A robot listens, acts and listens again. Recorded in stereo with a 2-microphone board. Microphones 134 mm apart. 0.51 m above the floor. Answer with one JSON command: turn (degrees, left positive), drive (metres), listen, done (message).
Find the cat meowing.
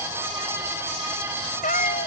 {"turn": 90}
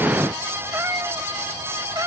{"turn": -25}
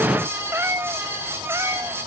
{"turn": -20}
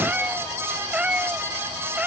{"turn": -10}
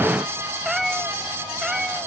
{"done": "Facing the cat meowing."}